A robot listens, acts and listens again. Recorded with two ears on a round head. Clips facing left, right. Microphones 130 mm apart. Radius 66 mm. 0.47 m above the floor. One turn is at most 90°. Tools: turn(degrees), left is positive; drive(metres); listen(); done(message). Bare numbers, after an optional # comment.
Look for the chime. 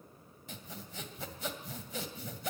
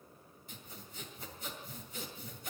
listen()
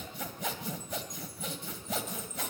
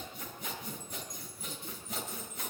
# The chime: about 20° left or 160° left.
turn(20)
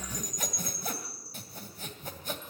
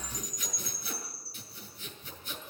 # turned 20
# So it is at 135° left.
turn(90)
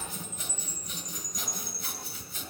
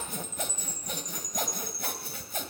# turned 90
# The chime is now 50° left.
turn(50)
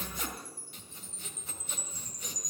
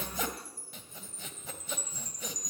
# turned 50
# The chime is now 20° left.
turn(20)
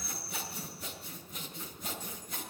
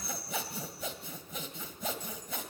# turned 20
done("Found it: a chime, straight ahead.")